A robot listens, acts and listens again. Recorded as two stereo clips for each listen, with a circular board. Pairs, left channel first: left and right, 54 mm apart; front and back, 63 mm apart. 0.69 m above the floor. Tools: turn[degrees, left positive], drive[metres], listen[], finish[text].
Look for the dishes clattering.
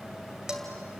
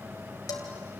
Thought: The dishes clattering: 10° right.
Action: turn[-10]
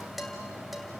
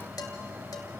Action: finish[Found it: dishes clattering, straight ahead, 2 to 4 m away.]